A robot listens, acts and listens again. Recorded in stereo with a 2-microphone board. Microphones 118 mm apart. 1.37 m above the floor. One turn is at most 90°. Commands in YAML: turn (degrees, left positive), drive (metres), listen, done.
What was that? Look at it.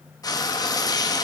turn: 30
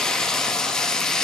done: "Facing the frying, 1 to 2 m away."